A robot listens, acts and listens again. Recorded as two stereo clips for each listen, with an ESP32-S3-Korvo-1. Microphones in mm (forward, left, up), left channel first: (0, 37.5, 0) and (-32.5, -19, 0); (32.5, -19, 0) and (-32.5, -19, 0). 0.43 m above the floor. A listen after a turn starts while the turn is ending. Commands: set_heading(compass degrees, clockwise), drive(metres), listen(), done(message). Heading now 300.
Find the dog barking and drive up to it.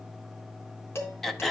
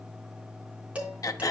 listen()
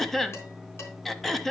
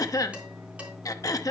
listen()
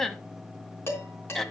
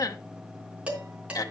done("I can't make out a dog barking, only throat clearing and dishes clattering.")